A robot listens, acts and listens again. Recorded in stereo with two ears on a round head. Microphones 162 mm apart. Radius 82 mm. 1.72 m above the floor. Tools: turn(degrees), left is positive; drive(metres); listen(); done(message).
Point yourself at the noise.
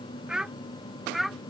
turn(degrees=30)
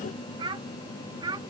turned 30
turn(degrees=-25)
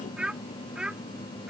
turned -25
done("Facing the child speaking.")